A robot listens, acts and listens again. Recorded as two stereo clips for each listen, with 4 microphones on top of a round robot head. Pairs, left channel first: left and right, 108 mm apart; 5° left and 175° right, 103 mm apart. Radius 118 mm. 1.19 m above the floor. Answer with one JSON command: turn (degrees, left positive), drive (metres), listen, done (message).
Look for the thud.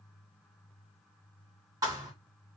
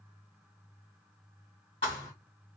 {"turn": -35}
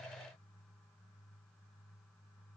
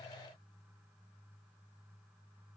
{"done": "I heard a thud from this way, but can't make it out now."}